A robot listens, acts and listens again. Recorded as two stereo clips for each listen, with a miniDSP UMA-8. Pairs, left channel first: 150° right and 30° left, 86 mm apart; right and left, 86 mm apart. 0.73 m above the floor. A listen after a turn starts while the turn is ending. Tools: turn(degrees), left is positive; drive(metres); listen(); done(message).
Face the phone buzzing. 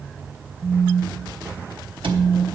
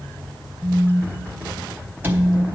turn(degrees=-25)
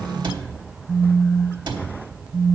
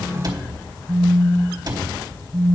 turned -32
done("Facing the phone buzzing.")